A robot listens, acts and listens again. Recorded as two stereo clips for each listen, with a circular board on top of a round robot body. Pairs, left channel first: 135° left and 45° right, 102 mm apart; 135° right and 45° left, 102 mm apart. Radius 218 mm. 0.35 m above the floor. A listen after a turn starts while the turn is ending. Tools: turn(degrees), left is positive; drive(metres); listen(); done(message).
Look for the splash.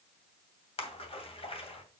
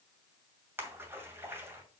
turn(degrees=115)
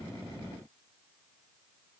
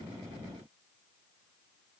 done("Facing where the splash came from. I can't hear it now.")